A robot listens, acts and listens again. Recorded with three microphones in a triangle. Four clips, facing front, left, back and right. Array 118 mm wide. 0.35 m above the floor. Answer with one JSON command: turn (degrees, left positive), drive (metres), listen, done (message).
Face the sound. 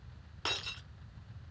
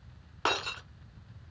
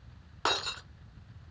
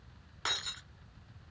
{"turn": 130}
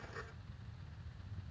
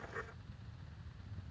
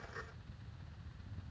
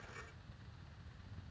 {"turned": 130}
{"done": "I heard breaking glass from this way, but can't make it out now."}